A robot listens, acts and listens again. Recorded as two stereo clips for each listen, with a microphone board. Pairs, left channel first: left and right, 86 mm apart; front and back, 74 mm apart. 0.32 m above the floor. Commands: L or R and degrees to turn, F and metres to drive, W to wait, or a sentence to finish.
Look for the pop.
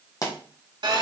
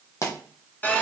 L45
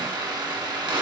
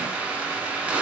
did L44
Facing where the pop came from. I can't hear it now.